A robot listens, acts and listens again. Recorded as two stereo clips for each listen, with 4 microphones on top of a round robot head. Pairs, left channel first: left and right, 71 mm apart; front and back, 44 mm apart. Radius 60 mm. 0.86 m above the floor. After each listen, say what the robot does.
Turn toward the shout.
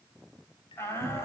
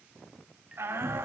Turn 150° left.
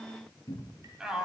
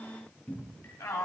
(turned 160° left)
Turn 10° right.
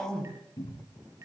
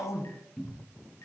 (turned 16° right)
Found it: a shout, straight ahead.